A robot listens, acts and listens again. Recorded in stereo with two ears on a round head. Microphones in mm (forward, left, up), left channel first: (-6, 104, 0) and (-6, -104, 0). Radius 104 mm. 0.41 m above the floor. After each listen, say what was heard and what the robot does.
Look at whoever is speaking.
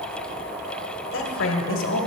The woman speaking: about 60° left or 120° left. Turn 60° left.
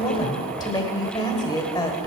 So it is at 20° left. Turn 20° left.
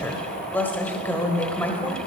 The woman speaking is now 10° left. Turn 10° left.
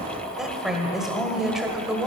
Facing the woman speaking, 1 to 2 m away.